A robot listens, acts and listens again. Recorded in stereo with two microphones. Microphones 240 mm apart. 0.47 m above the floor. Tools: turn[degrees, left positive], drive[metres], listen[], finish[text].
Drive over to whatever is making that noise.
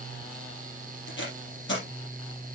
Thought: The tape being pulled: about 55° left or 125° left.
Action: turn[55]
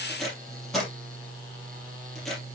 Action: drive[1.0]
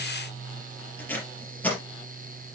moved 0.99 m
Thought: The tape being pulled is now 10° left.
Action: turn[10]
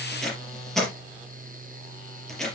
Action: drive[1.0]
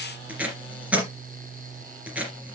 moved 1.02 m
Action: drive[1.0]
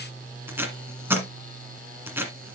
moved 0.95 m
Thought: The tape being pulled is now 10° right.
Action: turn[-10]
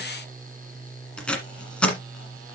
Action: drive[1.0]
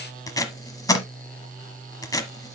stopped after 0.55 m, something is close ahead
Thought: The tape being pulled is now 15° left.
Action: turn[15]
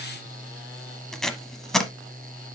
Action: finish[Arrived at the tape being pulled, straight ahead.]